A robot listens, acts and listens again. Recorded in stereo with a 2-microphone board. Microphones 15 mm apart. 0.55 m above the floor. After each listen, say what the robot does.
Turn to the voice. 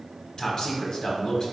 Turn 50° left.
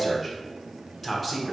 Turn 15° left.
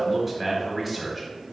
Found it: a man speaking, straight ahead.